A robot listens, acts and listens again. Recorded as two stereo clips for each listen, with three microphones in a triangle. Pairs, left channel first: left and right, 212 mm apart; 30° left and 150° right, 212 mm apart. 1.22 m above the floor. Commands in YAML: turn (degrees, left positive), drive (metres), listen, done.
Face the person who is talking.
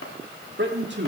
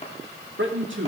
turn: -125
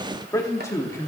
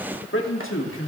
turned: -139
turn: 15
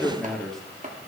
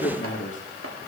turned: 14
done: "Facing the man speaking, 2 to 4 m away."